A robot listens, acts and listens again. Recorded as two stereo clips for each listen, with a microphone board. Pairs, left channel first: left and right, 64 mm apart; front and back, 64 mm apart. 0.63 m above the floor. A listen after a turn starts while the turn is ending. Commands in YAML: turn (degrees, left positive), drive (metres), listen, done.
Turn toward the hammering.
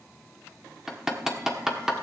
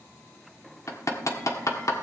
done: "Found it: hammering, straight ahead."